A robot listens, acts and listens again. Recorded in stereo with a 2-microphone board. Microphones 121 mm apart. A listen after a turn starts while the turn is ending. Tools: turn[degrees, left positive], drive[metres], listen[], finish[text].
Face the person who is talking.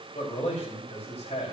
Thought: The man speaking: about 75° left or 105° left.
Action: turn[75]
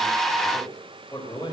Thought: So it is at 30° left.
Action: turn[30]
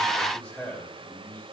Action: finish[Found it: a man speaking, straight ahead, over 4 m away.]